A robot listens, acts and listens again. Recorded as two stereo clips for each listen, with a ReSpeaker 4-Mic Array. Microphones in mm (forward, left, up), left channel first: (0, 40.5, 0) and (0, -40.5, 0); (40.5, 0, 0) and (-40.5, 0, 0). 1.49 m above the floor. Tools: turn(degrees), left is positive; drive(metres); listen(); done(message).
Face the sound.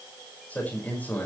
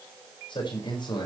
turn(degrees=20)
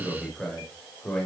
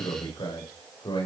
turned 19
turn(degrees=10)
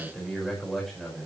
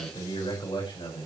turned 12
done("Found it: a man speaking, straight ahead, over 4 m away.")